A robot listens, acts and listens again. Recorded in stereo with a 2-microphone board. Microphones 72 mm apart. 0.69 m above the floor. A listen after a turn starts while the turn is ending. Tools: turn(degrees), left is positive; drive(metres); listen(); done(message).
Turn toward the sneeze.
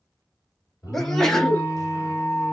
turn(degrees=30)
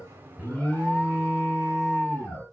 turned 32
listen()
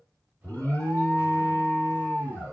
done("I heard a sneeze, but can't make it out now. It was about 30° right or 145° left.")